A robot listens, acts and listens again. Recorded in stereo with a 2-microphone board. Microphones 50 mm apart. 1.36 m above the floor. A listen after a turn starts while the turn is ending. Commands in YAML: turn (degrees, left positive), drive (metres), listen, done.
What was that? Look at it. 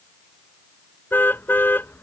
turn: 40
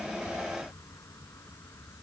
listen: true
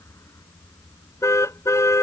turn: 100
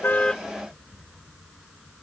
listen: true
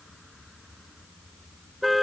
done: "Found it: a car horn, straight ahead."